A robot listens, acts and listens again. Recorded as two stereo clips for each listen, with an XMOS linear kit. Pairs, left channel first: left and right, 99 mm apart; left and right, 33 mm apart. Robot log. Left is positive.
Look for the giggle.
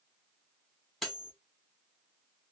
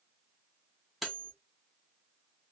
cmd idle
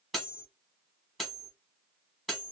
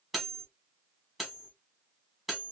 cmd idle
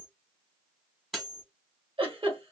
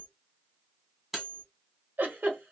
note: The giggle: about 65° right or 115° right.
cmd yaw -65
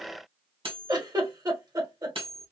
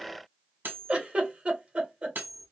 note: So it is at 45° right.
cmd yaw -45
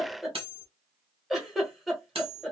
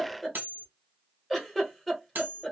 end: Facing the giggle, 1 to 2 m away.